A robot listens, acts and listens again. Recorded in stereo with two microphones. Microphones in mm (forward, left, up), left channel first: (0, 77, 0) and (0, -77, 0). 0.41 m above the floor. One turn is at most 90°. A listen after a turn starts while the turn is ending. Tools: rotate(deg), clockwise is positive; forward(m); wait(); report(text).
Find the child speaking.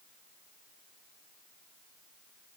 wait()
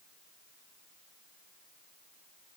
wait()
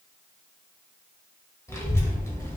rotate(-20)
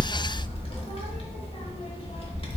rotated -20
rotate(-90)
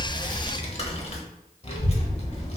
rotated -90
rotate(-50)
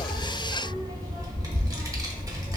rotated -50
rotate(25)
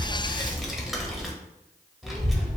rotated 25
report("Found it: a child speaking, straight ahead.")